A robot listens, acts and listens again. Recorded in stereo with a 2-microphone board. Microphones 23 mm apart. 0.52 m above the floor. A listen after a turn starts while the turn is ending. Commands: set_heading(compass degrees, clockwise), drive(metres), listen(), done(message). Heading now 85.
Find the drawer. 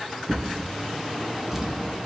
set_heading(115)
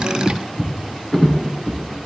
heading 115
set_heading(100)
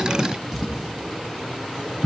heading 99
done("Found it: a drawer, straight ahead.")